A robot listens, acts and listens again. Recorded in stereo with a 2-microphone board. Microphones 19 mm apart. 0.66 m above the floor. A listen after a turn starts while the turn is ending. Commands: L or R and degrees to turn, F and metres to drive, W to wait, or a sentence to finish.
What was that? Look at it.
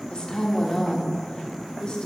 L45
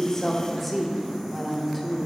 L10
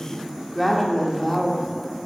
Facing the woman speaking, 1 to 2 m away.